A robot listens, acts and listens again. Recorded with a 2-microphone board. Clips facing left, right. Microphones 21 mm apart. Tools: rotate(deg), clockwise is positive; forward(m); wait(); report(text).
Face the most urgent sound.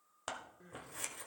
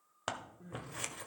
rotate(-40)
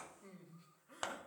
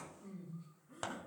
rotate(-95)
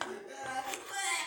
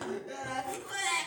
rotate(10)
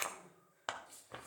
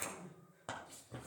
wait()
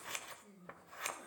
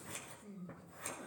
report("Facing the crying, 2 to 4 m away.")